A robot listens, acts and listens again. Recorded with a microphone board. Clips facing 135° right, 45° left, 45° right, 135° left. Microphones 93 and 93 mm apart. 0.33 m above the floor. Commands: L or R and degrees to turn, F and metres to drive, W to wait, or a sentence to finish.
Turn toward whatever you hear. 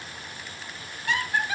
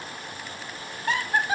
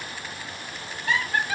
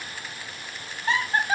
L85
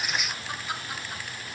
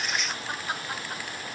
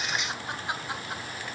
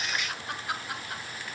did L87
L15
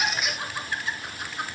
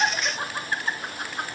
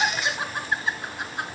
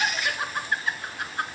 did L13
L25
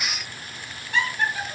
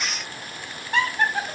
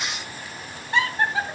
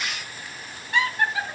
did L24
L15
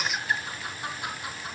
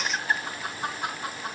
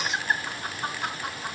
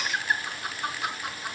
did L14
Found it: laughter, straight ahead, 2 to 4 m away.